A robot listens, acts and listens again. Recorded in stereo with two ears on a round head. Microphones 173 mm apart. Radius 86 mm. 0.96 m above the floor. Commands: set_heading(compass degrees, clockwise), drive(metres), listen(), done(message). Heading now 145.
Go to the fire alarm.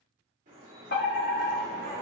set_heading(90)
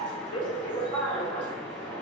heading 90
set_heading(40)
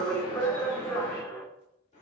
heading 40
set_heading(25)
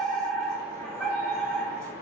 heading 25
drive(1.0)
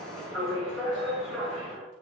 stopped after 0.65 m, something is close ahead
done("I am next to the fire alarm.")